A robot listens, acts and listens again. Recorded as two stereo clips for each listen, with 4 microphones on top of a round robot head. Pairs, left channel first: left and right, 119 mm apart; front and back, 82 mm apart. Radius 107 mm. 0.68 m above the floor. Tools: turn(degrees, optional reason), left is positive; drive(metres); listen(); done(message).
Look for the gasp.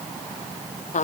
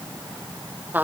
listen()
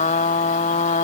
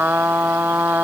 listen()
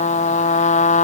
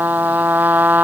done("I can't make out a gasp to turn to.")